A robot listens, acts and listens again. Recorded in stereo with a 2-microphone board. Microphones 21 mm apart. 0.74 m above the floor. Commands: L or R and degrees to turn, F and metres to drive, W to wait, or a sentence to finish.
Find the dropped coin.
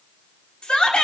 W
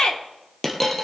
L30
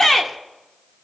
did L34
W
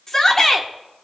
I heard a dropped coin, but can't make it out now. It was about 20° right or 135° left.